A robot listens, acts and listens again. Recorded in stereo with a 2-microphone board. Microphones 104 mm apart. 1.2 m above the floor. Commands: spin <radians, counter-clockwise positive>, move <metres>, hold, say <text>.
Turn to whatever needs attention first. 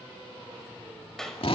hold
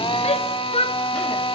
spin 1.57
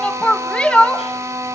spin 0.17
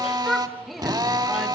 hold
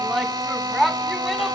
say Found it: a shout, straight ahead.